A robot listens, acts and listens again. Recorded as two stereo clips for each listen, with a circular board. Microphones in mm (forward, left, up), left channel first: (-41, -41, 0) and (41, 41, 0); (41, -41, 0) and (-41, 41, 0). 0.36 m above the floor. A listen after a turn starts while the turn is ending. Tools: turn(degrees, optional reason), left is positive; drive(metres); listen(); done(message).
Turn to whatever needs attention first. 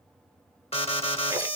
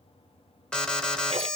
turn(degrees=-125, reason="The alarm: 125° right.")
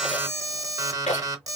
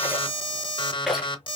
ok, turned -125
turn(degrees=-10, reason="The alarm is now 10° right.")
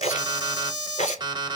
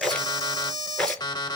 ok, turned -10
done("Found it: an alarm, straight ahead.")